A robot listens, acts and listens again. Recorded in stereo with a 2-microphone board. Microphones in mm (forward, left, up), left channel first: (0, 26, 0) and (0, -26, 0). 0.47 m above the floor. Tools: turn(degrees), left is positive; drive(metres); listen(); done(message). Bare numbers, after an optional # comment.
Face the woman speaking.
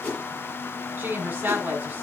# The woman speaking: about 30° right or 150° right.
turn(-30)
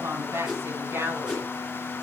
# So it is at 125° right.
turn(-125)
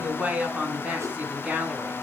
# The woman speaking is now 25° right.
turn(-25)
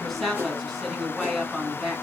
done("Facing the woman speaking.")